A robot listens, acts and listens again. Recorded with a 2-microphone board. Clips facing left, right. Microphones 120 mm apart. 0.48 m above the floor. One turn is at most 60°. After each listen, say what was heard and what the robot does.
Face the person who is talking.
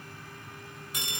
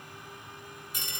Keep listening.
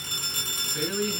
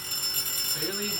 The man speaking: about 20° right or 160° right. Turn 20° right.
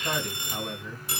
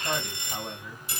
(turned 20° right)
Found it: a man speaking, straight ahead, 2 to 4 m away.